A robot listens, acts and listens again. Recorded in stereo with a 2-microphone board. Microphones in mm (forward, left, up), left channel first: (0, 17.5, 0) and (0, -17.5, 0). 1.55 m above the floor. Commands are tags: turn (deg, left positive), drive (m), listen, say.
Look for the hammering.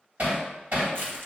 <turn deg="-50"/>
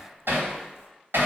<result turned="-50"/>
<turn deg="-80"/>
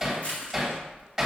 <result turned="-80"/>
<say>Found it: hammering, straight ahead, 2 to 4 m away.</say>